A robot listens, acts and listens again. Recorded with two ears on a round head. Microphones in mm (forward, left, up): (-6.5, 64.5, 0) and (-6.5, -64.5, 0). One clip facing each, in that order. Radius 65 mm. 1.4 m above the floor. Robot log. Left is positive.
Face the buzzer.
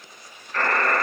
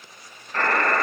note: The buzzer: about 25° right or 155° right.
cmd yaw -25
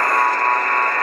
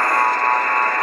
note: So it is at 130° right.
cmd yaw -130
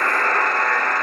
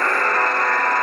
note: The buzzer is now 10° right.
cmd yaw -10
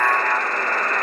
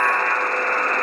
end: Found it: a buzzer, straight ahead, 1 to 2 m away.